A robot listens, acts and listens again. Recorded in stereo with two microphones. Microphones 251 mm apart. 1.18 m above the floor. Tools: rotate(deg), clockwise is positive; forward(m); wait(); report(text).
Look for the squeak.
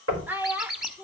rotate(30)
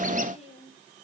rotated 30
wait()
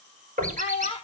wait()
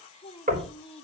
report("I heard a squeak, but can't make it out now. It was about 25° left or 145° right.")